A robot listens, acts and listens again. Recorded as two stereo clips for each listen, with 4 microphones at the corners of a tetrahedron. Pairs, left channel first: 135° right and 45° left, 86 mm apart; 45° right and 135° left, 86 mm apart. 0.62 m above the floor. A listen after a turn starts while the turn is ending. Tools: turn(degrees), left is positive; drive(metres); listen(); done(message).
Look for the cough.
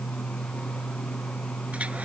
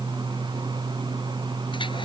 listen()
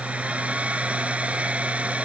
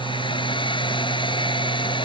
listen()
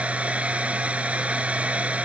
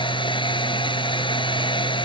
done("I can't make out a cough, only a hair dryer.")